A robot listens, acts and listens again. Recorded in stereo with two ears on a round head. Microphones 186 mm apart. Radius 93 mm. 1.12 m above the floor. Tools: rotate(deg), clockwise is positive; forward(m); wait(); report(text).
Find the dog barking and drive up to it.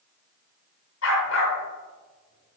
rotate(-70)
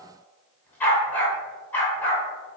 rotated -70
rotate(-10)
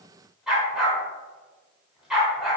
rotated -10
forward(1.0)
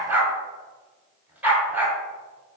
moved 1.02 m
rotate(10)
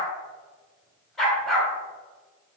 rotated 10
forward(1.0)
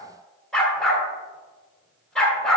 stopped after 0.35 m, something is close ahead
report("Arrived at the dog barking, straight ahead.")